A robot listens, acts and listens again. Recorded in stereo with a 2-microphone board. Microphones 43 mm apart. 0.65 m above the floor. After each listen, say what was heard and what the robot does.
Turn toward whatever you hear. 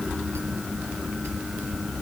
Keep listening.
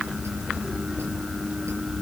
Keep listening.
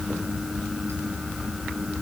I can't make out anything.